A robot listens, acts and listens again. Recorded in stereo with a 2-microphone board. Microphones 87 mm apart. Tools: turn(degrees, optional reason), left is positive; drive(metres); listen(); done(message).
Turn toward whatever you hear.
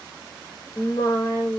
turn(degrees=40, reason="The singing: about 40° left or 140° left.")
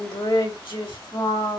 turn(degrees=110, reason="So it is at 110° left.")
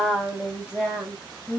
turn(degrees=-10, reason="The singing is now 10° right.")
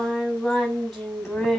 done("Found it: singing, straight ahead.")